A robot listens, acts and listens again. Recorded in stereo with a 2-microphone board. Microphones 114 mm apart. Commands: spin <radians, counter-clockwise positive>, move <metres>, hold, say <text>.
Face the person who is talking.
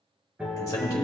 spin 0.52
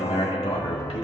spin 1.92
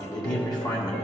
spin 0.70
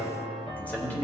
spin 0.26
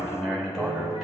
say Found it: a man speaking, straight ahead, 1 to 2 m away.